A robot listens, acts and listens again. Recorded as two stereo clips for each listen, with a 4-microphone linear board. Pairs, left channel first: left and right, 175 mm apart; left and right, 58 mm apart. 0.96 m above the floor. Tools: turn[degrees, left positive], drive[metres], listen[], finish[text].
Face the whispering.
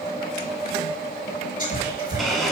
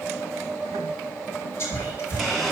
Thought: The whispering: about 50° left or 130° left.
Action: turn[50]
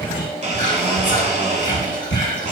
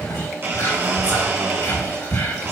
Thought: So it is at 75° left.
Action: turn[75]
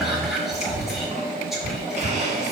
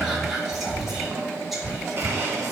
Action: finish[Found it: whispering, straight ahead.]